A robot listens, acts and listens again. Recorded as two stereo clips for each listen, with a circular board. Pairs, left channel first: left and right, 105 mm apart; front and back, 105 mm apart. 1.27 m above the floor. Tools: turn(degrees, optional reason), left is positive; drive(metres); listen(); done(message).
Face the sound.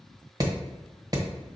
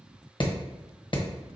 turn(degrees=-40, reason="The hammering: 40° right.")
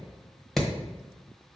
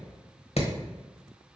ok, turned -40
done("Facing the hammering.")